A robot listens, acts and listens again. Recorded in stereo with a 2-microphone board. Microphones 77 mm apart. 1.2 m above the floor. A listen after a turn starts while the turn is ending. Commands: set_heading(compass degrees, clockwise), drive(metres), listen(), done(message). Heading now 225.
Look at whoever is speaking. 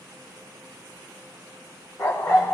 listen()
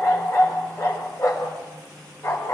listen()
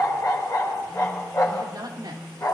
set_heading(290)
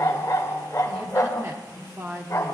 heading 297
set_heading(337)
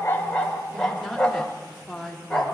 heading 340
done("Facing the woman speaking.")